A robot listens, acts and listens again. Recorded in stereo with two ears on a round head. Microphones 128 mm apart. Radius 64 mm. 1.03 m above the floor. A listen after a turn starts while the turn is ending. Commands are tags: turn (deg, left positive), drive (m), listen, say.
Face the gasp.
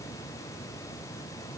<listen/>
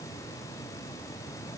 <listen/>
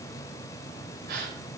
<turn deg="-90"/>
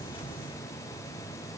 <say>Facing where the gasp came from. I can't hear it now.</say>